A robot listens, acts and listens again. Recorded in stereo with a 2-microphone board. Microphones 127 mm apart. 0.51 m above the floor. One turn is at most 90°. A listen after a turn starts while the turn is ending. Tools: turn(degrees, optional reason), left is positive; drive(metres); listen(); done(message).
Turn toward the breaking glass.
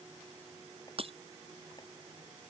turn(degrees=-50, reason="The breaking glass: about 50° right or 130° right.")
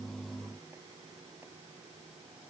listen()
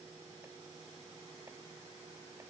done("I heard breaking glass, but can't make it out now. It was about straight ahead or 80° right.")